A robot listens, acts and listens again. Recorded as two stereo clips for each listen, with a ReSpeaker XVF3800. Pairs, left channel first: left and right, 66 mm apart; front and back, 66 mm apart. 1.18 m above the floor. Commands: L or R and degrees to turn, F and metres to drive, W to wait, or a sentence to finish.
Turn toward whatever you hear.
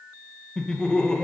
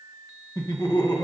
L10
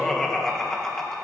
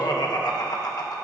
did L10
Found it: laughter, straight ahead.